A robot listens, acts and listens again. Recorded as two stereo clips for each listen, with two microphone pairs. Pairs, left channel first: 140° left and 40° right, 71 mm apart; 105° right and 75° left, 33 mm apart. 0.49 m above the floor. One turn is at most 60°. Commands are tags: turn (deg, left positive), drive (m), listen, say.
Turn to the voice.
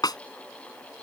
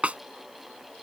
<listen/>
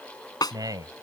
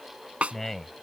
<turn deg="-25"/>
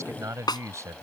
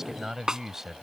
<say>Found it: a man speaking, straight ahead.</say>